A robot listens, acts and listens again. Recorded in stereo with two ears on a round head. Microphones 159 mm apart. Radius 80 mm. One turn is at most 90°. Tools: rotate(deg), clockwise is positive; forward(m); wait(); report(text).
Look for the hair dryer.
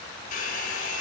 rotate(-45)
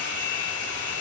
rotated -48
rotate(-85)
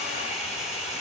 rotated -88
report("Found it: a hair dryer, straight ahead, over 4 m away.")